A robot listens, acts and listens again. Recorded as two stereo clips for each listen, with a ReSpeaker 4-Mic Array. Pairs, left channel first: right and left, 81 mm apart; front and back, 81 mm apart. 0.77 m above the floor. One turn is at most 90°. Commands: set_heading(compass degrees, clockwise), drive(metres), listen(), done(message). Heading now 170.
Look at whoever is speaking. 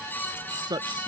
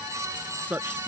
set_heading(80)
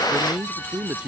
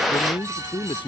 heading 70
set_heading(60)
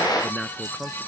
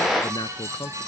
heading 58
done("Facing the man speaking.")